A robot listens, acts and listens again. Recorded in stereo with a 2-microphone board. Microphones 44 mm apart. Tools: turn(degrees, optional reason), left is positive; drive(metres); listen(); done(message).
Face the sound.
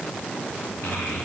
turn(degrees=70, reason="The child speaking: about 70° left or 110° left.")
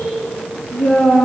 turn(degrees=25, reason="So it is at 25° left.")
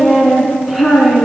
done("Facing the child speaking, 2 to 4 m away.")